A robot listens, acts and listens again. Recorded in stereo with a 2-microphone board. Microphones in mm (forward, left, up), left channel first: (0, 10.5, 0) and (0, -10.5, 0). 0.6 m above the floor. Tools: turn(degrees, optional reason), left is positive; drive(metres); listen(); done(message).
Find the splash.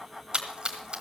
turn(degrees=-50, reason="The splash: about 50° right or 130° right.")
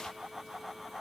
listen()
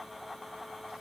done("I heard a splash, but can't make it out now. It was about straight ahead or 80° right.")